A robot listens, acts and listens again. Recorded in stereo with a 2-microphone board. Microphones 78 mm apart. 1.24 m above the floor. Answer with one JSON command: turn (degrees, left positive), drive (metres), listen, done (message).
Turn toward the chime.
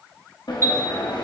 {"turn": -35}
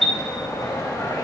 {"done": "Found it: a chime, straight ahead."}